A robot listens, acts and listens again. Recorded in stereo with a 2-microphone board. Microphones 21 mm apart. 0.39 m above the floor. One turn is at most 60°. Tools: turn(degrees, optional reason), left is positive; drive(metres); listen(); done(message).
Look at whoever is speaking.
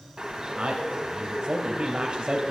turn(degrees=-55, reason="The man speaking: about 55° right or 125° right.")
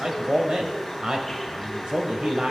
turn(degrees=-55, reason="So it is at 55° right.")
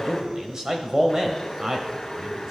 turn(degrees=-35, reason="The man speaking is now 35° right.")
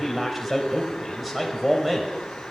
done("Facing the man speaking.")